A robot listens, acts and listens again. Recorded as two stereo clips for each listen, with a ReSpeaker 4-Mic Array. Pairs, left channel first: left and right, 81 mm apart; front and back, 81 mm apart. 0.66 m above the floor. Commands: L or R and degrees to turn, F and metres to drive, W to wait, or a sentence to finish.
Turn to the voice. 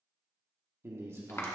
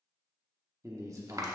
R140
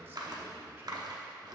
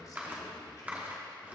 R35
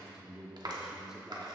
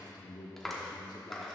R10
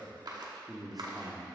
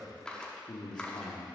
Found it: a man speaking, straight ahead, 1 to 2 m away.